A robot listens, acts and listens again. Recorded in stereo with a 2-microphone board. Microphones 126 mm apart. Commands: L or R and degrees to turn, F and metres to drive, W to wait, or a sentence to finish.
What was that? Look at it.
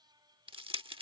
R45
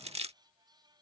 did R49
R75
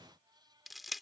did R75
Found it: crushing, straight ahead.